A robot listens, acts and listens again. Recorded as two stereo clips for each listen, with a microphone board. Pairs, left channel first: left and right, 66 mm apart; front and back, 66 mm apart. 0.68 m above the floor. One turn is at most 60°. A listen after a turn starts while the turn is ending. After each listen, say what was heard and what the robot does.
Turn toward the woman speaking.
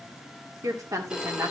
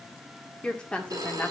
The woman speaking: 65° right. Turn 60° right.
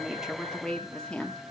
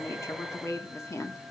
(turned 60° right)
The woman speaking is now 20° left. Turn 20° left.
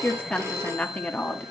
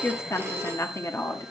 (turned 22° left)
The woman speaking is now 30° left. Turn 30° left.
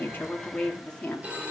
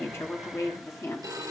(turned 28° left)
The woman speaking is now 25° left. Turn 25° left.
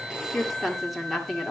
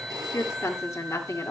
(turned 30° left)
Facing the woman speaking.